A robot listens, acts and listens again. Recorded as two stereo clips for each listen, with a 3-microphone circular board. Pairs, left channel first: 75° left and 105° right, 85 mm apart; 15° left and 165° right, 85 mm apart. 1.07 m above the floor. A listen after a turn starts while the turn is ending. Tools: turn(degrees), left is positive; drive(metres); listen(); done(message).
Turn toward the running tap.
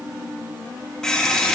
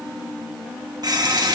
turn(degrees=160)
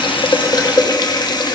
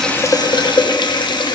turn(degrees=40)
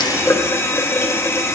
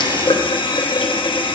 turn(degrees=20)
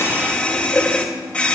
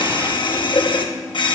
done("Found it: a running tap, straight ahead.")